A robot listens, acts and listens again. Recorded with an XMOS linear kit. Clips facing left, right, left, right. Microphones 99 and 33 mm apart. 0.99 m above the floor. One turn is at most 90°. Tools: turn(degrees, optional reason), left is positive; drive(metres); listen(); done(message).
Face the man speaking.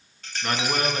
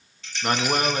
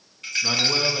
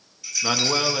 turn(degrees=-30, reason="The man speaking: about 30° right or 150° right.")
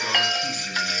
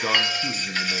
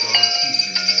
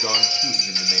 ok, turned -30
listen()
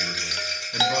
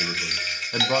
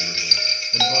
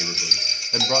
turn(degrees=-90, reason="So it is at 120° right.")
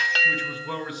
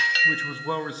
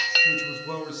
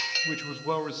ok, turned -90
turn(degrees=-40, reason="The man speaking is now 40° right.")
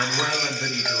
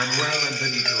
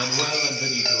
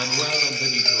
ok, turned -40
done("Found it: a man speaking, straight ahead.")